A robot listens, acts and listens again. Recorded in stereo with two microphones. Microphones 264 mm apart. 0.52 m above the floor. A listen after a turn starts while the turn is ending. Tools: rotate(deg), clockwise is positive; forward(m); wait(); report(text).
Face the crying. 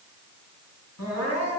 rotate(-70)
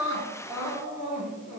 report("Found it: crying, straight ahead, over 4 m away.")